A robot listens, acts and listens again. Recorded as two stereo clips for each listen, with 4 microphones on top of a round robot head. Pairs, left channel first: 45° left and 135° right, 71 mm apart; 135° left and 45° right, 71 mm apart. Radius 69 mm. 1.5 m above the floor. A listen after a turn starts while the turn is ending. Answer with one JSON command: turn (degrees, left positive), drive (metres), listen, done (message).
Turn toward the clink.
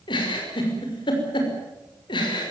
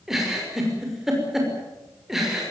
{"listen": true}
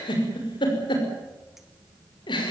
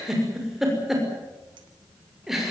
{"listen": true}
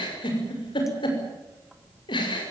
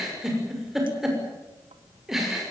{"done": "I can't make out a clink to turn to."}